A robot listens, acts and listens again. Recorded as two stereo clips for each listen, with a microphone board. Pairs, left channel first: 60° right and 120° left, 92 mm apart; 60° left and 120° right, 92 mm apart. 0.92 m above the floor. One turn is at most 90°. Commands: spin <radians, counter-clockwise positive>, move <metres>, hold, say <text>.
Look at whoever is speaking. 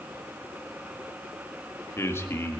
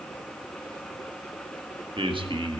spin -1.57
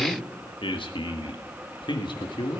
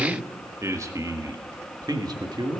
spin -1.48
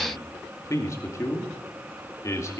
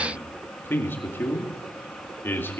say Facing the man speaking.